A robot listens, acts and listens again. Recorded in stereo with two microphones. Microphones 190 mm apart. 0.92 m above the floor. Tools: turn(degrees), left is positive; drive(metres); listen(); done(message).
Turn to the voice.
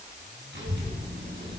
turn(degrees=-70)
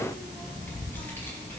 turn(degrees=15)
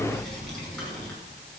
done("Facing the child speaking.")